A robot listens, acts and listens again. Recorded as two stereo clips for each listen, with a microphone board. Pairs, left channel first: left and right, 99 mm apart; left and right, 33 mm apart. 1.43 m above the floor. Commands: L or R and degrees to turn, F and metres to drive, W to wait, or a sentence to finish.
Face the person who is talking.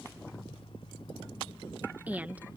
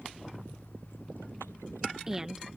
R15
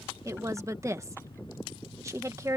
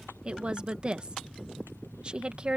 R150
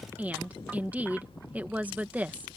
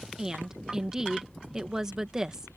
R15
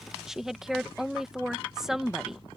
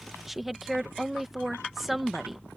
Facing the woman speaking.